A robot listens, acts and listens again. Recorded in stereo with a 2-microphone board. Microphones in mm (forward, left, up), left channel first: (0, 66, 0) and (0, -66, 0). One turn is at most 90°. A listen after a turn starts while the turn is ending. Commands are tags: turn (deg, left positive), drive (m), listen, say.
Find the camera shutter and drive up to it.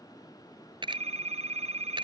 <turn deg="-40"/>
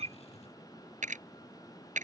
<turn deg="-90"/>
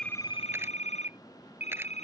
<turn deg="-10"/>
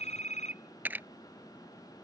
<turn deg="-15"/>
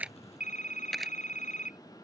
<drive m="1.0"/>
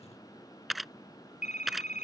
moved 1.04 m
<drive m="1.0"/>
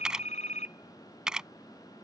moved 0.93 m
<drive m="1.0"/>
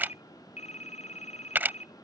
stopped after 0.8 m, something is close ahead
<turn deg="-15"/>
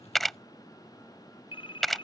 <say>Arrived at the camera shutter, straight ahead.</say>